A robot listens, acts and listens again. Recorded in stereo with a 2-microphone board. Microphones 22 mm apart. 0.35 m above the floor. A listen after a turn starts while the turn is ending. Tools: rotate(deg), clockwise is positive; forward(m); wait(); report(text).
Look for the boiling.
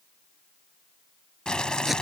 rotate(-35)
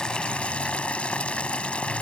rotate(-105)
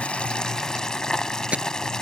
rotate(-40)
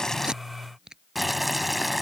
report("Facing the boiling.")